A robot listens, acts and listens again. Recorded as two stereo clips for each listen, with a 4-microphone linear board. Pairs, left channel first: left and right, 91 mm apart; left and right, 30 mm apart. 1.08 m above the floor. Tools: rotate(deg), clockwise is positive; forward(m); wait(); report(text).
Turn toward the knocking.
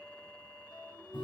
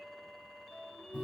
wait()
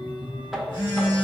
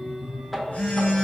rotate(30)
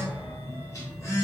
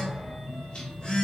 wait()
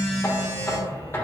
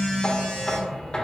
rotate(-25)
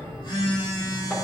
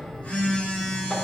wait()
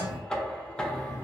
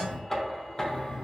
rotate(-10)
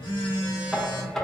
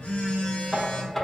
report("Facing the knocking, under 1 m away.")